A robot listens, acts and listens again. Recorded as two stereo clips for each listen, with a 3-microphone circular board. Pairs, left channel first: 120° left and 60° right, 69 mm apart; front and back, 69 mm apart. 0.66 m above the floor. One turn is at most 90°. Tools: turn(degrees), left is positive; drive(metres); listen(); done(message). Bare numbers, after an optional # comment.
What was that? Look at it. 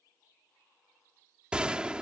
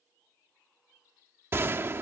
# The gunshot: 135° right.
turn(-90)
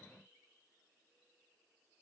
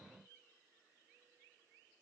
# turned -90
# Nothing new. It was at 45° right.
turn(-45)
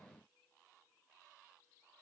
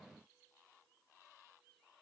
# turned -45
done("Facing where the gunshot came from. I can't hear it now.")